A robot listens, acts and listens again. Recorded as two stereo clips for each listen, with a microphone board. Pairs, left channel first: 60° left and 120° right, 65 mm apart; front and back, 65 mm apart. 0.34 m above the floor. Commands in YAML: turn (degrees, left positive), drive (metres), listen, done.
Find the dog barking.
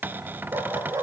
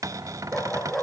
turn: -90
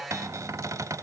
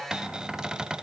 listen: true
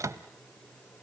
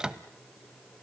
listen: true
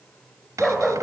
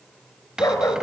turn: -40
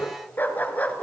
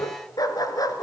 done: "Facing the dog barking."